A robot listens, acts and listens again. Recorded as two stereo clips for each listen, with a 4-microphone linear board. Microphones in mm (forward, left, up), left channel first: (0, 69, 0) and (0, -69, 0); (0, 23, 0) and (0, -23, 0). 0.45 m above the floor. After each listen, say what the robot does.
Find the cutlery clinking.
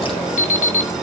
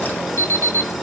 Keep listening.
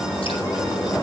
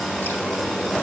Keep listening.
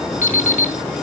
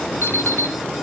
I can't make out cutlery clinking to turn to.